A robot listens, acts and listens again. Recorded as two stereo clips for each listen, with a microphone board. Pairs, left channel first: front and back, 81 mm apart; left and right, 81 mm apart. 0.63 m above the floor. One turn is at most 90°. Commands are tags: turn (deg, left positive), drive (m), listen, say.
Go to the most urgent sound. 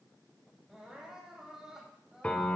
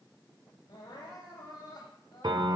<turn deg="90"/>
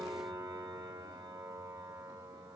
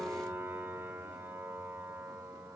<listen/>
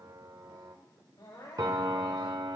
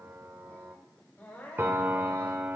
<turn deg="25"/>
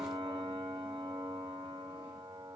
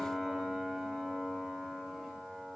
<listen/>
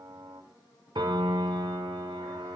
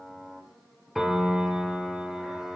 <listen/>
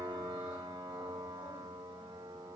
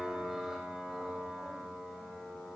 <say>Facing where the crying came from. I can't hear it now. I did not reach it.</say>